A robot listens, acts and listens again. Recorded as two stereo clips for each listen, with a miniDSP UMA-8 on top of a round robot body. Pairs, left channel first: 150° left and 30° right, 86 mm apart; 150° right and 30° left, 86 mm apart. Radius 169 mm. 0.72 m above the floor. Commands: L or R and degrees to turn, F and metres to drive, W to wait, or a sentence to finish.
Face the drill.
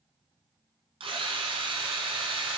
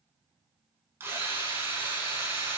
R35
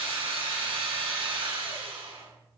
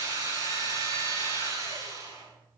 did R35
R25
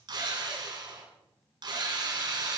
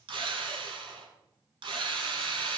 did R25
Found it: a drill, straight ahead, over 4 m away.